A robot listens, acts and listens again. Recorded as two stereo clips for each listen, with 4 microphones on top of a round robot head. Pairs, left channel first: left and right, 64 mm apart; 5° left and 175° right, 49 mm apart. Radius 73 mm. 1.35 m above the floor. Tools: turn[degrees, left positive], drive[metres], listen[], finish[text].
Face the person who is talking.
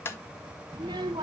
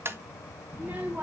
Thought: The child speaking: 110° right.
Action: turn[-110]
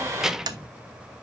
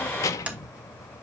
Action: finish[Found it: a child speaking, straight ahead, under 1 m away.]